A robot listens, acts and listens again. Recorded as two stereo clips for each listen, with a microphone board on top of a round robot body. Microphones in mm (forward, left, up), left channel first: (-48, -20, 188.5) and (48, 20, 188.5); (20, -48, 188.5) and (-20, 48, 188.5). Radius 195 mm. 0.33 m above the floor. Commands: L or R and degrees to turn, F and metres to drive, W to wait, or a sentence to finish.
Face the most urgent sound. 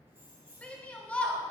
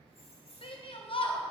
R80
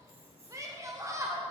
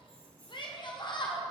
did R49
R35
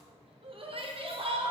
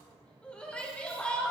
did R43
L10
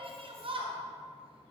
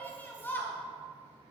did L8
Found it: a shout, straight ahead.